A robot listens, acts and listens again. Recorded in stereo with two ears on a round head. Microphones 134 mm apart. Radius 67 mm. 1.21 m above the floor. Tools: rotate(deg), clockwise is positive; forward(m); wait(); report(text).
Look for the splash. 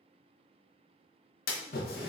rotate(-65)
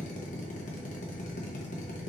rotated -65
wait()
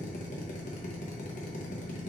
report("I heard a splash, but can't make it out now. It was about straight ahead or 50° left.")